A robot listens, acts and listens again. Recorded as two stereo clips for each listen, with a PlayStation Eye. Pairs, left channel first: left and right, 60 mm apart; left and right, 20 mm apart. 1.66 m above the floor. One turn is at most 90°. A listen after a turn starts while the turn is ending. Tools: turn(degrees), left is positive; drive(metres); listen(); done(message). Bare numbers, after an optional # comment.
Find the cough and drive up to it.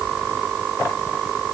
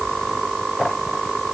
listen()
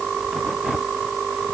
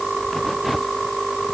listen()
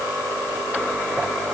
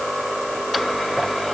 done("I can't make out a cough to turn to.")